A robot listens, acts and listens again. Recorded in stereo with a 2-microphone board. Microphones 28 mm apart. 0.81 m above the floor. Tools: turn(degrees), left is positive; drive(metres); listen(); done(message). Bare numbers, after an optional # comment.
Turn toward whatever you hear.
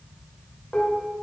turn(90)
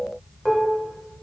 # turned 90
# So it is at 15° left.
turn(15)
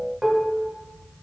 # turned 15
done("Facing the dishes clattering.")